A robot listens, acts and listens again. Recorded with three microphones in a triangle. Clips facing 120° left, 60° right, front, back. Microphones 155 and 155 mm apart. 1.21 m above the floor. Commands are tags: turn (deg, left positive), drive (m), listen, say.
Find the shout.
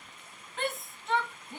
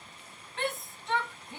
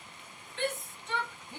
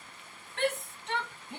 <turn deg="-150"/>
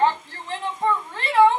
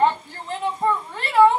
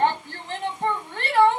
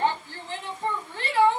<turn deg="25"/>
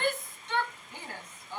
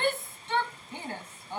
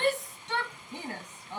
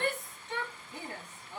<say>Found it: a shout, straight ahead, 1 to 2 m away.</say>